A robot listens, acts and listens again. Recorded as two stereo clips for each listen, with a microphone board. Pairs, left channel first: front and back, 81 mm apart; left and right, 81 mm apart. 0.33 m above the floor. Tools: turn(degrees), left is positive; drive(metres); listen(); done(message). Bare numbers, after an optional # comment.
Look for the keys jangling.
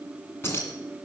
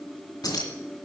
# The keys jangling: 55° left.
turn(55)
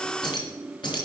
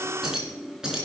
# The keys jangling is now 10° right.
turn(-10)
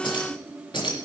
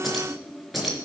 done("Facing the keys jangling, 2 to 4 m away.")